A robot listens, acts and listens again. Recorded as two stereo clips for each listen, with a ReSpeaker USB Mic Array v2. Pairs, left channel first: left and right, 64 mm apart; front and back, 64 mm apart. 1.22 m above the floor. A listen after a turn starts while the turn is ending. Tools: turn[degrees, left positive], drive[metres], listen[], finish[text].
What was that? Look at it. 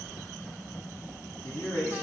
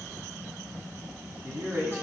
Thought: The man speaking: 135° left.
Action: turn[135]
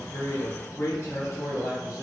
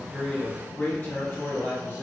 Thought: The man speaking is now 55° left.
Action: turn[55]
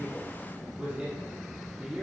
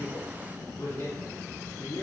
Thought: The man speaking is now 20° right.
Action: turn[-20]
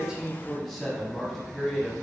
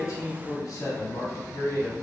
Action: finish[Facing the man speaking.]